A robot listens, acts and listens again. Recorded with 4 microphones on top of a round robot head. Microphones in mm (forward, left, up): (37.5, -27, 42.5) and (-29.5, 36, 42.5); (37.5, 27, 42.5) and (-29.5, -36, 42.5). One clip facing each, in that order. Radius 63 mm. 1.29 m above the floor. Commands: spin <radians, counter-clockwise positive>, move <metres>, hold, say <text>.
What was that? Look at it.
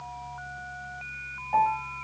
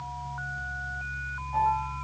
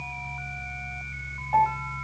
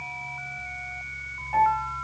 spin -0.35
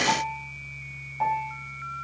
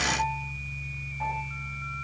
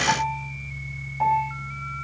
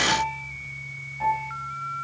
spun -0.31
say Found it: a piano, straight ahead.